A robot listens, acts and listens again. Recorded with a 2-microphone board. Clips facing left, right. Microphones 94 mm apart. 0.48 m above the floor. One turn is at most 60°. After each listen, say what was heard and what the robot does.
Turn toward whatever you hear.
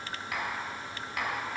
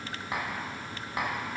The tapping: about 30° right or 150° right. Turn 30° right.
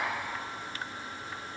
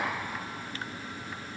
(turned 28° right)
Facing the tapping, 1 to 2 m away.